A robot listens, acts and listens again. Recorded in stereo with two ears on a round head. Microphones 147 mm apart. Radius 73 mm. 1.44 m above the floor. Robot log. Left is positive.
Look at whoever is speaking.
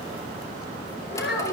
cmd yaw +90
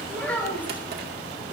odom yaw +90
note: So it is at 10° left.
cmd yaw +10
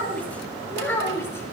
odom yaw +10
note: The child speaking is now 15° left.
cmd yaw +15
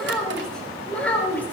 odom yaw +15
note: The child speaking is now 10° left.
cmd yaw +10
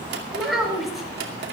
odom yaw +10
end: Found it: a child speaking, straight ahead, over 4 m away.